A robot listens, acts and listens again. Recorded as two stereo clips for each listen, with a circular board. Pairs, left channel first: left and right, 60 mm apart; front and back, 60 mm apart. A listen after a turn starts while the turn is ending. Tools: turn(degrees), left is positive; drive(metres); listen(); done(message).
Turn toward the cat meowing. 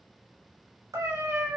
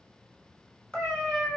turn(degrees=-75)
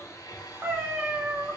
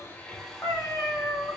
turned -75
turn(degrees=-30)
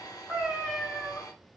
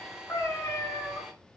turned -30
done("Found it: a cat meowing, straight ahead, 1 to 2 m away.")